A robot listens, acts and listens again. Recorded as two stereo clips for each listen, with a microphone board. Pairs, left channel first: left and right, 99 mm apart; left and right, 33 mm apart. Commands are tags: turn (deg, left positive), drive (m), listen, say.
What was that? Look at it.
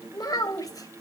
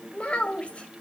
<turn deg="40"/>
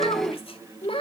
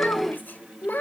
<turn deg="110"/>
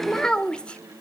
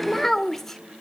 <turn deg="10"/>
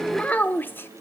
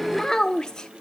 <turn deg="20"/>
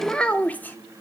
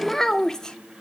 <turn deg="20"/>
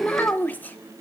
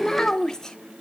<turn deg="15"/>
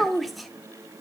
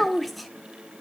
<say>Found it: a child speaking, straight ahead.</say>